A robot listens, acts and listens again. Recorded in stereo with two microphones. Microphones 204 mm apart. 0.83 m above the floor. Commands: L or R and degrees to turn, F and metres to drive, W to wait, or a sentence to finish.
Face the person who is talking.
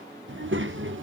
R75
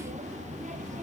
R35
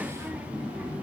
Found it: a child speaking, straight ahead.